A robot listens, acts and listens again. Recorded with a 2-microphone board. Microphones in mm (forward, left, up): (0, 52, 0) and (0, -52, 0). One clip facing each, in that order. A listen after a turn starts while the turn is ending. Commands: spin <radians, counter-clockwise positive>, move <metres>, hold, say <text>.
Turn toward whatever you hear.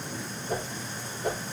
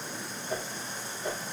spin 0.87
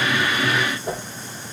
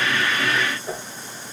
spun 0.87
spin 1.40
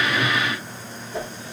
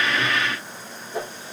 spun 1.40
spin -0.17
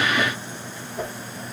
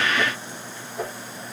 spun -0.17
say Facing the whoosh, over 4 m away.